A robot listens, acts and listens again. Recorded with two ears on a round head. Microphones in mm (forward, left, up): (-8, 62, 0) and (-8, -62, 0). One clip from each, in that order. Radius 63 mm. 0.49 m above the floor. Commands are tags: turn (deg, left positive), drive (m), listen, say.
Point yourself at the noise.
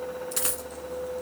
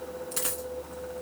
<turn deg="30"/>
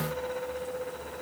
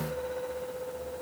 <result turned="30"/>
<listen/>
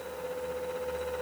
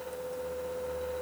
<say>I heard a dropped coin, but can't make it out now. It was about 15° right or 135° left.</say>